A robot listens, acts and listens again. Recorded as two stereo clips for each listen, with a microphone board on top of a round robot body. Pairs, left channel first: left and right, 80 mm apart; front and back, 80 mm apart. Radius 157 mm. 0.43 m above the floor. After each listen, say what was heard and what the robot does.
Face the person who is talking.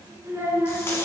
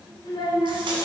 The child speaking: 30° right. Turn 30° right.
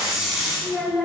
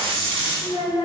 Found it: a child speaking, straight ahead.